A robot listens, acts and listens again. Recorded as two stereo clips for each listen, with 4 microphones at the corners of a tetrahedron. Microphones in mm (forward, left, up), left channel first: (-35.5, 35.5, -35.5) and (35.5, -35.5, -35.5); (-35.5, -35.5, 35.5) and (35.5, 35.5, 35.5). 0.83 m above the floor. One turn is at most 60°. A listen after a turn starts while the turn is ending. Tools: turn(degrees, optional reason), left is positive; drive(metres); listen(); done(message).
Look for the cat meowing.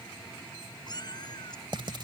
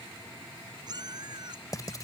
turn(degrees=60, reason="The cat meowing: 90° left.")
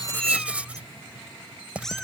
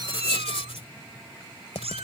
turn(degrees=50, reason="The cat meowing is now 50° left.")
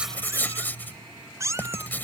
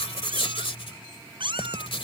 turn(degrees=15, reason="The cat meowing is now 15° left.")
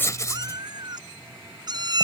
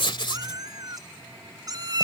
done("Facing the cat meowing.")